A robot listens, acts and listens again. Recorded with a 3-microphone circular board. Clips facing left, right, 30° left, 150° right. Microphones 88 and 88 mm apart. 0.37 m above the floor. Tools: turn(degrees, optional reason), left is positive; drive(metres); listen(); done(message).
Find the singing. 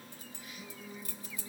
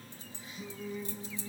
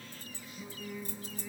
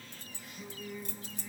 turn(degrees=-70, reason="The singing: 70° right.")
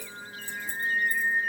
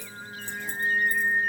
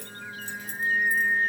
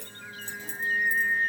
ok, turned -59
turn(degrees=-30, reason="The singing is now 30° right.")
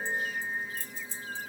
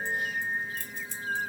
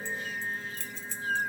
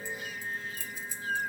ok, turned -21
turn(degrees=-40, reason="The singing is now 40° right.")
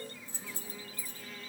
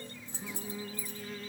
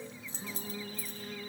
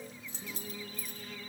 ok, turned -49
turn(degrees=-25, reason="The singing is now 25° right.")
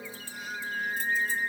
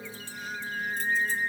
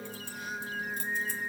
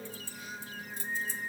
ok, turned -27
done("Facing the singing.")